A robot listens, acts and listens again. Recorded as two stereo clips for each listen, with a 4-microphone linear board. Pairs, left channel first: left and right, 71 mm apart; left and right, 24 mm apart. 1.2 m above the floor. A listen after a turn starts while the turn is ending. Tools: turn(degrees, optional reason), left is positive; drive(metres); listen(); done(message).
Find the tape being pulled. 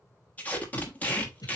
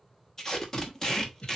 turn(degrees=20, reason="The tape being pulled: about 20° left or 160° left.")
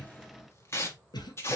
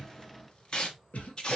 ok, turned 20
turn(degrees=135, reason="So it is at 135° left.")
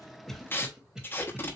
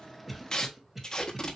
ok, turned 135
turn(degrees=35, reason="The tape being pulled is now 35° left.")
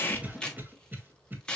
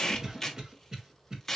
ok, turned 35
turn(degrees=15, reason="The tape being pulled is now 15° left.")
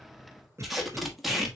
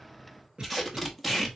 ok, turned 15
done("Facing the tape being pulled.")